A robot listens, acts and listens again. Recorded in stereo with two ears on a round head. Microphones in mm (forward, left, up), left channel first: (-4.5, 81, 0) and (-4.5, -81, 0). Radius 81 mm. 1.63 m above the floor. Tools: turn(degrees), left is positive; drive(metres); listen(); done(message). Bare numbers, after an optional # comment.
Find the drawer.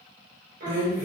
# The drawer: about 20° right or 160° right.
turn(-20)
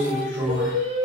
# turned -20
done("Facing the drawer.")